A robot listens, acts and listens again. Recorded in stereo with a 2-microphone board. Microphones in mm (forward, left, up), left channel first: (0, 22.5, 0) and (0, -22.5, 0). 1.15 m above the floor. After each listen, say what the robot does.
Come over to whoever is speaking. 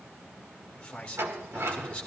Turn 25° left.
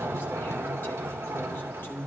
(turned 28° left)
Turn 130° left.
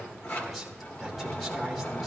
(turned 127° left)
Keep listening.
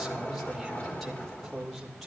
Drive 1.0 m forward.
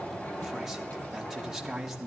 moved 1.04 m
Turn 10° right.
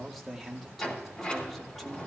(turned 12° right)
Drive 1.0 m forward.
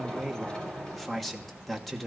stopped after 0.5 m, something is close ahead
I am next to the man speaking.